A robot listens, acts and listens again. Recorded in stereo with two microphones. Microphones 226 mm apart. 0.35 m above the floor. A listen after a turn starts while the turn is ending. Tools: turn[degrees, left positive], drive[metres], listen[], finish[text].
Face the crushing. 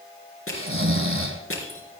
Thought: The crushing: about 70° left or 110° left.
Action: turn[70]
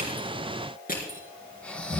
Thought: So it is at 40° left.
Action: turn[40]
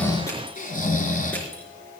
Thought: The crushing is now 10° left.
Action: turn[10]
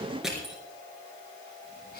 Action: finish[Facing the crushing.]